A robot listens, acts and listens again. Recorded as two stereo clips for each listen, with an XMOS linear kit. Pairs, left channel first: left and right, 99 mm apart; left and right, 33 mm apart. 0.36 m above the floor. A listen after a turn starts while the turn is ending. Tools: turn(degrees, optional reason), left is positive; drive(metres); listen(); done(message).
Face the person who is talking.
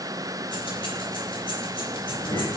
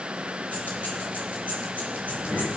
turn(degrees=50, reason="The child speaking: about 50° left or 130° left.")
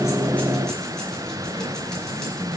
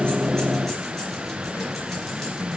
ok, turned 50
turn(degrees=80, reason="So it is at 80° left.")
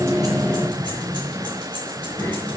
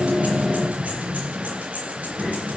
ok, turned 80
turn(degrees=15, reason="The child speaking is now 15° left.")
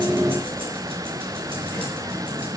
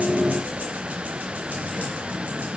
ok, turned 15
turn(degrees=10, reason="The child speaking is now 10° left.")
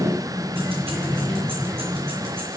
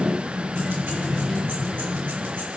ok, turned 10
done("Facing the child speaking.")